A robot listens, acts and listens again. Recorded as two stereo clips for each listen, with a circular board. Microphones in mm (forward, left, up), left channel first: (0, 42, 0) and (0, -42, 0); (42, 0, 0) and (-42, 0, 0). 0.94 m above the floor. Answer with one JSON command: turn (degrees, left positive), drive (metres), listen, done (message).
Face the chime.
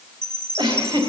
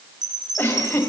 {"turn": -145}
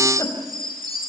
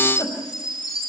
{"turn": -45}
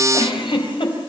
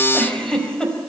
{"listen": true}
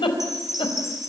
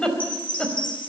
{"done": "Facing the chime, over 4 m away."}